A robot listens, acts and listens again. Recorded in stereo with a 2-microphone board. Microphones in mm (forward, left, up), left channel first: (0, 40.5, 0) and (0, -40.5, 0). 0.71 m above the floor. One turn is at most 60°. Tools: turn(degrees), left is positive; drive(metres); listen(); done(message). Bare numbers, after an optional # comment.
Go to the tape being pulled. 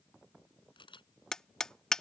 listen()
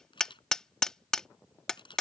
listen()
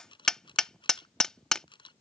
done("I can't make out tape being pulled, only a camera shutter and hammering.")